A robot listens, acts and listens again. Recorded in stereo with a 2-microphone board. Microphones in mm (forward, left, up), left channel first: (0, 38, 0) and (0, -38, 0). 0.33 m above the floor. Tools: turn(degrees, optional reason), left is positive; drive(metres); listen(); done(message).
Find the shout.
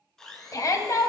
turn(degrees=50, reason="The shout: about 50° left or 130° left.")
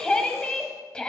turn(degrees=15, reason="So it is at 15° left.")
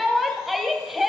done("Facing the shout.")